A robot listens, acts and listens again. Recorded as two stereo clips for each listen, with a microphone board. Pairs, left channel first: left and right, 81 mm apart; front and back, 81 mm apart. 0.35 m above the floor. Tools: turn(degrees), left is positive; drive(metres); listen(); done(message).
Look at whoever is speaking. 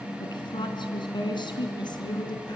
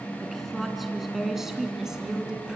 turn(degrees=100)
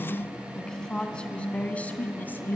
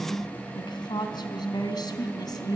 turn(degrees=25)
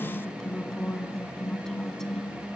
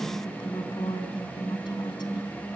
turn(degrees=10)
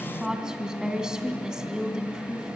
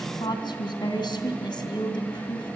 turn(degrees=-10)
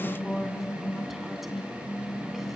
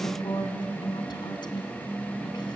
done("Facing the woman speaking, 2 to 4 m away.")